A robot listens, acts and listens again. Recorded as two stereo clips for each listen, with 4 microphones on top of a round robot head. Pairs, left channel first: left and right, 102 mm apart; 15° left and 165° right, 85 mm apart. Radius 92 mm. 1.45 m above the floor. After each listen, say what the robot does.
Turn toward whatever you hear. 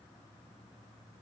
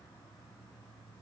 Keep listening.
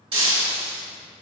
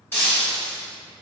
Turn 55° right.
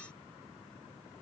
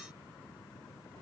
I heard breaking glass from this way, but can't make it out now.